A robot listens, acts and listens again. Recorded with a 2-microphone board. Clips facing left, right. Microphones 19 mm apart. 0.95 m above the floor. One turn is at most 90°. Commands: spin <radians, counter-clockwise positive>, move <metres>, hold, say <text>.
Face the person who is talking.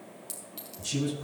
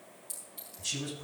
spin -0.52
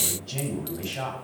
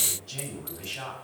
spin 0.44
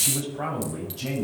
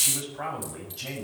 say Found it: a man speaking, straight ahead, over 4 m away.